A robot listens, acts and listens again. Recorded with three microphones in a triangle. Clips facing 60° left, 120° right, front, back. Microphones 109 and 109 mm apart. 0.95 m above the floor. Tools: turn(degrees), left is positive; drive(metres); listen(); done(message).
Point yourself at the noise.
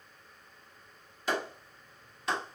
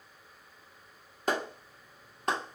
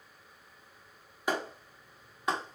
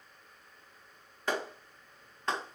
turn(degrees=-75)
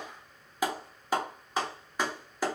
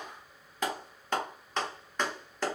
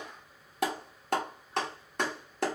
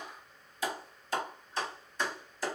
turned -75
turn(degrees=-20)
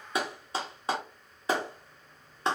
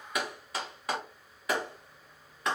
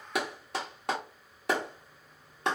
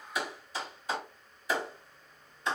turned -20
done("Facing the clap, 1 to 2 m away.")